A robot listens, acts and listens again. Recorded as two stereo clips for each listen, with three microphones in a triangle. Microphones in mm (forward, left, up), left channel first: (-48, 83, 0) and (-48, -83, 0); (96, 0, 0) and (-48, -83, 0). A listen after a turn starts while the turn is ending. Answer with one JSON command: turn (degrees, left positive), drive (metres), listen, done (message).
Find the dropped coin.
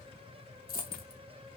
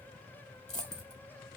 {"turn": 70}
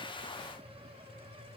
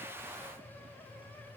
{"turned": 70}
{"done": "Facing where the dropped coin came from. I can't hear it now."}